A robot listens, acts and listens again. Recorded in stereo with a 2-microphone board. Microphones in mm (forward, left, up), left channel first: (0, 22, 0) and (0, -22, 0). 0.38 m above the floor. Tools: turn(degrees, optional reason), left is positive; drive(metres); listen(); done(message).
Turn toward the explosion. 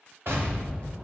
turn(degrees=-60, reason="The explosion: about 60° right or 120° right.")
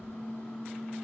listen()
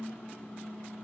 done("I heard an explosion, but can't make it out now. It was about straight ahead or 60° right.")